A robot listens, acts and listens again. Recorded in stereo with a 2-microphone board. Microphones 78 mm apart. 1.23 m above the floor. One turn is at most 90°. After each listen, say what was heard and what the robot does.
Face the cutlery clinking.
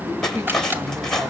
Turn 30° left.
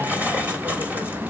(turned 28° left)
So it is at 20° right. Turn 20° right.
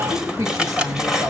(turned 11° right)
The cutlery clinking is now 10° right. Turn 10° right.
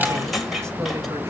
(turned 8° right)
Facing the cutlery clinking, 2 to 4 m away.